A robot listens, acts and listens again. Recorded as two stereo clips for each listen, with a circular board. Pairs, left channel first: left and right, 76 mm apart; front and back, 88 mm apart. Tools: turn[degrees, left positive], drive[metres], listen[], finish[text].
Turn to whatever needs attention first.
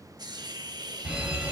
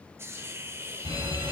Thought: The fire alarm: 165° right.
Action: turn[-165]
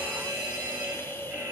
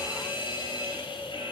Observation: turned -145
Thought: The fire alarm is now 20° right.
Action: turn[-20]
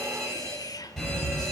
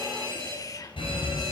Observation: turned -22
Action: finish[Found it: a fire alarm, straight ahead, over 4 m away.]